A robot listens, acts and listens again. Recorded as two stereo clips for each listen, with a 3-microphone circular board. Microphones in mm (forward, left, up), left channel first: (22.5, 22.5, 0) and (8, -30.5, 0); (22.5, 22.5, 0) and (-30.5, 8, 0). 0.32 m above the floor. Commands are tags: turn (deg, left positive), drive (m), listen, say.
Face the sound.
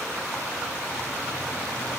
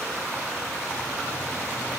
<listen/>
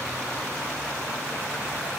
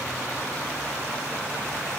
<listen/>
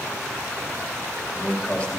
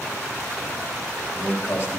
<turn deg="20"/>
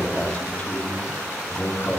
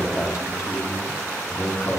<turn deg="25"/>
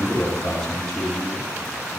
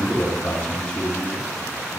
<say>Found it: a man speaking, straight ahead.</say>